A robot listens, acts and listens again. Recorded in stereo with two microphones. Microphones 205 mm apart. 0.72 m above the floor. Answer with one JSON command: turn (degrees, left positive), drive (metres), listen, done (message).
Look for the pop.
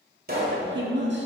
{"turn": -50}
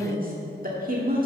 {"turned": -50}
{"listen": true}
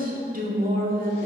{"done": "I heard a pop, but can't make it out now. It was about straight ahead or 80° right."}